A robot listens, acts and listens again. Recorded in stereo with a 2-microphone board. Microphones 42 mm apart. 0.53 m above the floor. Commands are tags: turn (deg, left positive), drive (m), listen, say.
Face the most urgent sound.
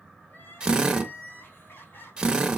<turn deg="60"/>
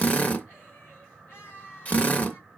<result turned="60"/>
<turn deg="60"/>
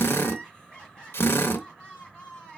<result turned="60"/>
<turn deg="20"/>
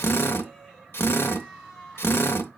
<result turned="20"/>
<turn deg="10"/>
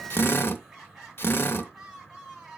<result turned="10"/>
<say>Found it: crying, straight ahead, 2 to 4 m away.</say>